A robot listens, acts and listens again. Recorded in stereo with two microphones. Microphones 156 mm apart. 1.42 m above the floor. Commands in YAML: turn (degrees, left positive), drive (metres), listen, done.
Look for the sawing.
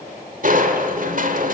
listen: true
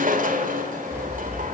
turn: -30
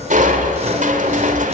listen: true
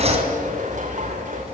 turn: -135
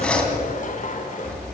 turn: 10
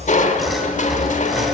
done: "Found it: sawing, straight ahead."